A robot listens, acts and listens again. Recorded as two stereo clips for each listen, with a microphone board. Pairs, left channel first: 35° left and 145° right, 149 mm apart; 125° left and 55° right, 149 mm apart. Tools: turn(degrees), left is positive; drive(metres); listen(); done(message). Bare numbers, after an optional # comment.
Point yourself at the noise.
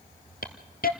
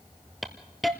# The hiss: 35° left.
turn(35)
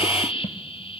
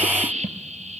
# The hiss is now 15° right.
turn(-15)
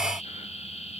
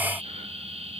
# The hiss is now 10° right.
turn(-10)
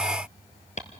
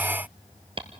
done("Facing the hiss.")